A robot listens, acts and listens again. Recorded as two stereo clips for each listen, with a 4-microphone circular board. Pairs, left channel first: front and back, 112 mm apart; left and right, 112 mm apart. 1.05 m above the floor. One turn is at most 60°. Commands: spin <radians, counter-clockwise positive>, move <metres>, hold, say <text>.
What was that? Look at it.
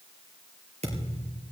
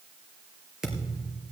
spin -1.05
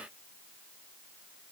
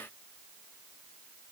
spin -1.05
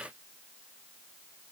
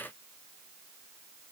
spin -0.96
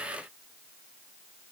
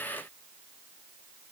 say I heard a thud from this way, but can't make it out now.